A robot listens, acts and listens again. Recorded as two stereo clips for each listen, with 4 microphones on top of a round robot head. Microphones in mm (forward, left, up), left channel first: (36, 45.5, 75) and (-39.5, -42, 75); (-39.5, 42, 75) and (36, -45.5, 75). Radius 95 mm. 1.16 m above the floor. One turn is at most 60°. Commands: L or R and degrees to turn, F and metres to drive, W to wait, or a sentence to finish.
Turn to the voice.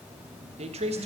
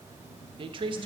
R60
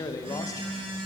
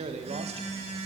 R15
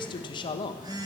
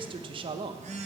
Found it: a man speaking, straight ahead, under 1 m away.